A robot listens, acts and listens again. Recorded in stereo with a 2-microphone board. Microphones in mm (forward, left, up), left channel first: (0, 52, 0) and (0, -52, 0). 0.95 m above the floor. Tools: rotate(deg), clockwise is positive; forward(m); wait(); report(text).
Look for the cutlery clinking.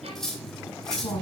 rotate(-30)
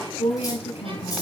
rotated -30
wait()
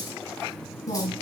wait()
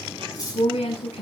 rotate(-145)
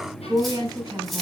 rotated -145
wait()
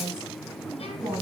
wait()
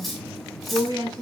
report("Facing the cutlery clinking, 2 to 4 m away.")